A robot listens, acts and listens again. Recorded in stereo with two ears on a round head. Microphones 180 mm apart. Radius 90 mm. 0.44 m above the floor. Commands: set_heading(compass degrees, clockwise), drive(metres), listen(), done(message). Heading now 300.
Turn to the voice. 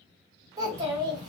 set_heading(320)
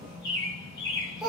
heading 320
done("Found it: a child speaking, straight ahead.")